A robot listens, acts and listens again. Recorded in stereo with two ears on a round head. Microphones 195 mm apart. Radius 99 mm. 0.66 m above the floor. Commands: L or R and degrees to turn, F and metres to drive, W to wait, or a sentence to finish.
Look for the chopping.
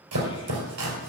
R75
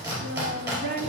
R15
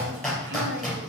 Facing the chopping.